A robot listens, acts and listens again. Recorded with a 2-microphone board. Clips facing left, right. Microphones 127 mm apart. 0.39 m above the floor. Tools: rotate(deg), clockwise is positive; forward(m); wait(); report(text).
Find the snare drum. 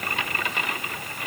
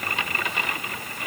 wait()
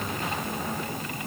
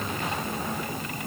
wait()
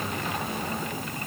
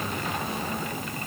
report("I can't make out a snare drum.")